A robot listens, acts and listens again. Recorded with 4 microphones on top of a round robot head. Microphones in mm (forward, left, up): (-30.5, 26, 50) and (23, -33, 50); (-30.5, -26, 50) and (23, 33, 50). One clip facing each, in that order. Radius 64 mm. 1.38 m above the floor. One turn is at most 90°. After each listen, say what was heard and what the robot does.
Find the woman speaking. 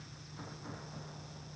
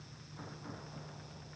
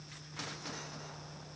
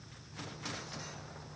Keep listening.
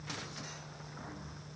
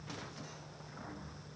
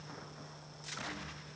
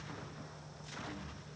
Keep listening.
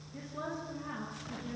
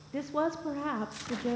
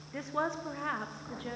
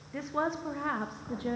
The woman speaking: 25° right. Turn 25° right.
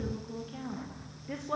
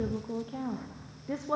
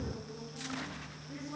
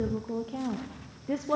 The woman speaking is now 25° left. Turn 25° left.
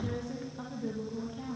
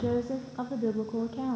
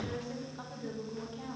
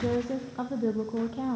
Facing the woman speaking, 1 to 2 m away.